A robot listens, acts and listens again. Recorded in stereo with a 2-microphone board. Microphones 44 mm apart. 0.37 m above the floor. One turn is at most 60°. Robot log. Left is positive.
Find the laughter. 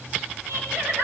note: The laughter: about 70° right or 110° right.
cmd yaw -60
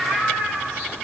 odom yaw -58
note: So it is at 40° right.
cmd yaw -40
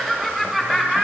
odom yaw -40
end: Found it: laughter, straight ahead.